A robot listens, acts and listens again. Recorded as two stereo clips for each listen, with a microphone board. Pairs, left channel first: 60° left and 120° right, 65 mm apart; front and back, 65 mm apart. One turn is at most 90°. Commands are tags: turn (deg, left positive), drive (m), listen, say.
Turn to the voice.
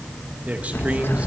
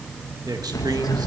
<turn deg="90"/>
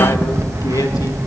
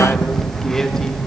<turn deg="85"/>
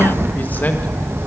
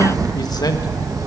<listen/>
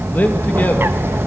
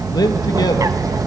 <say>Found it: a man speaking, straight ahead, 1 to 2 m away.</say>